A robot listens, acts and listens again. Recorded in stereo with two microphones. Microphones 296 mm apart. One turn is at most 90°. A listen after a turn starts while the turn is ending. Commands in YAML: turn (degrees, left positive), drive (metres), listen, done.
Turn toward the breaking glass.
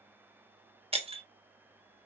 turn: -20
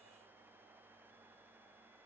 listen: true
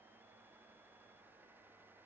done: "I heard breaking glass, but can't make it out now. It was about straight ahead or 140° right."